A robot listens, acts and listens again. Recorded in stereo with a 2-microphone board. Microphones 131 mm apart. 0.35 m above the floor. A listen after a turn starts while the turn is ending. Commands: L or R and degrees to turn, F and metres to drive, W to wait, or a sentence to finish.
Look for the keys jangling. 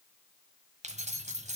R60
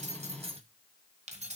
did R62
R60
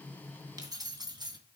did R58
R35
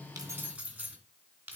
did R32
R15
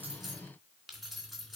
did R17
Found it: keys jangling, straight ahead, 2 to 4 m away.